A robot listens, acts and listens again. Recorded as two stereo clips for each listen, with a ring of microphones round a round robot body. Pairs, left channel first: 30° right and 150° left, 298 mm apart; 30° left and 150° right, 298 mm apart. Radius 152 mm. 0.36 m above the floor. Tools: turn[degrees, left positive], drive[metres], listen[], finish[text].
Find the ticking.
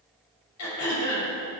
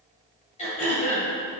Action: listen[]
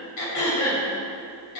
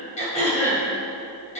Action: listen[]
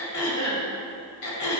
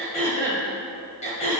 Action: finish[I can't make out ticking to turn to.]